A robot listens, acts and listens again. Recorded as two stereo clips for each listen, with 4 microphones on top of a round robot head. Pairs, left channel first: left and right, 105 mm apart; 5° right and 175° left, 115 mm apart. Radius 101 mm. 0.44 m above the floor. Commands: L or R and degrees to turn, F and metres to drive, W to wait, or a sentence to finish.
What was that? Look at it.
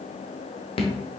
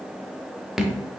L90
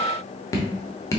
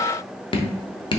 L30
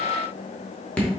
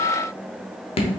L10
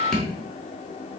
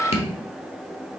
Facing the dripping.